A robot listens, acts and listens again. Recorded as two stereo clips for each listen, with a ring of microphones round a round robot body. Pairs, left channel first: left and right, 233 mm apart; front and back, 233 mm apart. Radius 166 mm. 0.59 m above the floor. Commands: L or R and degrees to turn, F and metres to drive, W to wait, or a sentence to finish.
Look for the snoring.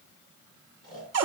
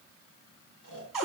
R35
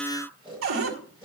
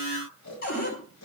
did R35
Facing the snoring.